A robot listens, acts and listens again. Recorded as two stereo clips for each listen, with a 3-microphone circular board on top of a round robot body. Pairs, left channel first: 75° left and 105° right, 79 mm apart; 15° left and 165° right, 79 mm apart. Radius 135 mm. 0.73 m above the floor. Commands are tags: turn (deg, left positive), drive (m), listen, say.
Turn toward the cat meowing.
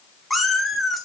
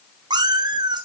<turn deg="165"/>
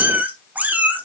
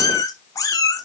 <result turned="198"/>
<turn deg="-35"/>
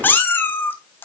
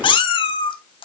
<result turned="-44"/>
<turn deg="10"/>
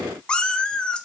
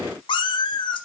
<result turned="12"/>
<say>Facing the cat meowing.</say>